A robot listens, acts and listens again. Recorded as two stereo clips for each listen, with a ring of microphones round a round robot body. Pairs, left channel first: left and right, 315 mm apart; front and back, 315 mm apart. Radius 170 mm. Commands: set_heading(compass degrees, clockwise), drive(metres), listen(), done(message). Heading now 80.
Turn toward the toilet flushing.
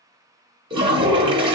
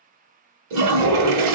set_heading(245)
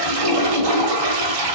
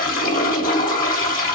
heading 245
set_heading(310)
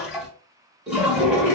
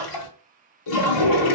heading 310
done("Found it: a toilet flushing, straight ahead.")